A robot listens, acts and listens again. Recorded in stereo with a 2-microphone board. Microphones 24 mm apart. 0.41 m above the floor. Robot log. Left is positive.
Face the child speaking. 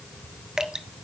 cmd idle
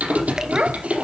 note: The child speaking: about 60° right or 120° right.
cmd yaw -60
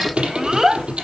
note: So it is at 25° right.
cmd yaw -25
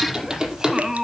note: The child speaking is now 25° right.
cmd yaw -25
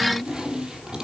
note: The child speaking is now 25° right.
cmd yaw -25
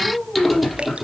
note: The child speaking is now 15° right.
cmd yaw -15
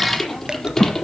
end: Facing the child speaking, 2 to 4 m away.